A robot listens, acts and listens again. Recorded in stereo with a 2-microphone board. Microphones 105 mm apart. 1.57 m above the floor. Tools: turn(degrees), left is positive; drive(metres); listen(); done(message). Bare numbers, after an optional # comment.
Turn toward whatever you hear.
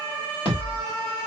# The thud: about 55° left or 125° left.
turn(55)
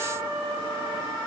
listen()
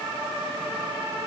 done("I heard a thud, but can't make it out now. It was about straight ahead or 70° left.")